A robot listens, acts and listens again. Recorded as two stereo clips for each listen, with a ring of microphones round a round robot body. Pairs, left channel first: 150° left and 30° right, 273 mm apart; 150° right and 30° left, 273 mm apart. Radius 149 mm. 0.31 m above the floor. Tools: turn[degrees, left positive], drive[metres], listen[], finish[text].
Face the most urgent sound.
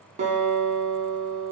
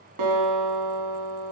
Action: listen[]
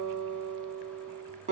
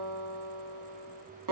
Action: listen[]
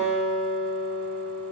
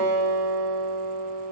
Action: finish[I can't make out anything urgent to turn to.]